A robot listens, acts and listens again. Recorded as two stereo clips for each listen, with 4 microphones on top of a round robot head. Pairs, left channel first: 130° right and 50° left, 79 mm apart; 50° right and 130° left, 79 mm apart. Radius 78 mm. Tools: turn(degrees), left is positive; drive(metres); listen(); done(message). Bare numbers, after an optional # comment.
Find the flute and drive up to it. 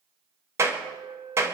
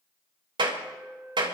# The flute: 55° left.
turn(55)
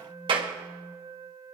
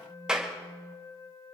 drive(1.0)
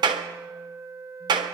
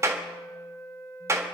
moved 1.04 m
drive(1.0)
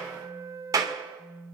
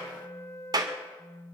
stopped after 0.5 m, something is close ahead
done("I am next to the flute.")